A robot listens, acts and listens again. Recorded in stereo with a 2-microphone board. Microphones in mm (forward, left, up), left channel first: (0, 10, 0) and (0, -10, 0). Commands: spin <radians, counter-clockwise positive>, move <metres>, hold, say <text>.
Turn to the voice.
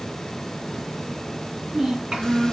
spin -0.87
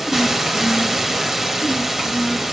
hold
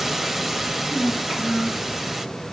spin -1.40
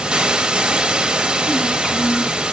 spin 0.44
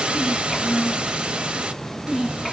say Found it: a child speaking, straight ahead, 2 to 4 m away.